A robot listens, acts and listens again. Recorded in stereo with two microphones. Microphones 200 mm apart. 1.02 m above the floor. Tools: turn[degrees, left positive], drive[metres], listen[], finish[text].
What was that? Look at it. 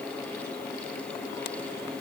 Action: listen[]
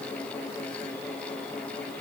Action: listen[]
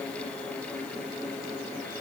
Action: finish[I can't make out anything.]